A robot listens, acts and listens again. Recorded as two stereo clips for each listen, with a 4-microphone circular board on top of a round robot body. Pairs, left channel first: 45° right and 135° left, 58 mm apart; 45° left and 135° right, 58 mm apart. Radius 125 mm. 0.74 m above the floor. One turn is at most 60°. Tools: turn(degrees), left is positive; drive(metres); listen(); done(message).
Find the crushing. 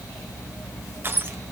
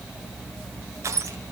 turn(degrees=-60)
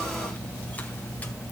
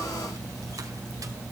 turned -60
turn(degrees=-60)
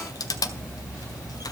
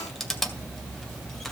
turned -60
turn(degrees=-40)
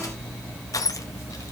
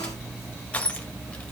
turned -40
turn(degrees=-20)
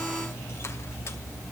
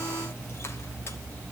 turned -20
listen()
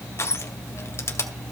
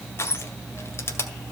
done("Facing the crushing.")